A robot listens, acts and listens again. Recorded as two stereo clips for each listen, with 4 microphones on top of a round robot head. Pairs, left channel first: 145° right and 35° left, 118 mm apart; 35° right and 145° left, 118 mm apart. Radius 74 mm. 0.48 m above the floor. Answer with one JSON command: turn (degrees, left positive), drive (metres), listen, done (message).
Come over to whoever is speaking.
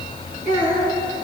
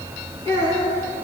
{"turn": 30}
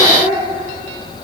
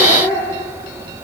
{"turn": 15}
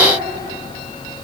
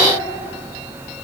{"listen": true}
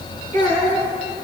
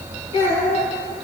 {"drive": 1.0}
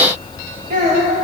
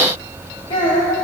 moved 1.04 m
{"turn": 15}
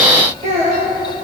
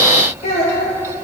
{"drive": 1.0}
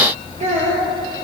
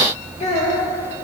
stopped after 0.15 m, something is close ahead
{"done": "Blocked. The child speaking is further on, straight ahead."}